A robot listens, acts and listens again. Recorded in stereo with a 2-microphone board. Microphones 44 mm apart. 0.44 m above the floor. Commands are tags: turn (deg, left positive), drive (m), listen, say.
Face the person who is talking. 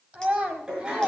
<turn deg="-25"/>
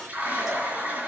<listen/>
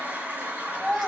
<say>Facing the child speaking, 2 to 4 m away.</say>